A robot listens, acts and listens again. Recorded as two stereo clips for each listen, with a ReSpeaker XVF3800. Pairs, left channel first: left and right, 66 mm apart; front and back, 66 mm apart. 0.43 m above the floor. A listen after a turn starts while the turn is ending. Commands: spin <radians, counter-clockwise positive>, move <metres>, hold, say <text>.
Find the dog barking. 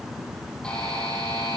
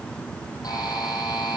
hold
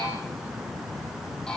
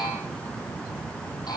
hold
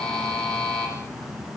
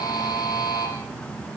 say I can't make out a dog barking to turn to.